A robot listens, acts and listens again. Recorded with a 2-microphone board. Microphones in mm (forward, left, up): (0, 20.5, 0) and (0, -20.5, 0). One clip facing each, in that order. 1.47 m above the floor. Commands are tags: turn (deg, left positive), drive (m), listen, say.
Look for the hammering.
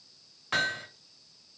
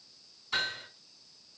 <turn deg="55"/>
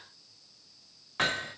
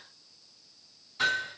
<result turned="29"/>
<turn deg="75"/>
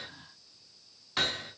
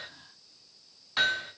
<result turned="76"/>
<say>Found it: hammering, straight ahead, 2 to 4 m away.</say>